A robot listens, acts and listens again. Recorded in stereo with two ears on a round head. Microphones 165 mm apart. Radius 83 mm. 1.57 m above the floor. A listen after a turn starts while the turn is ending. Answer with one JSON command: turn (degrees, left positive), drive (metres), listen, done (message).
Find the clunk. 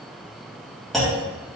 {"turn": 30}
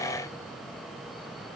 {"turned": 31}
{"listen": true}
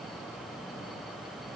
{"done": "I heard a clunk, but can't make it out now. It was about 30° right or 150° left."}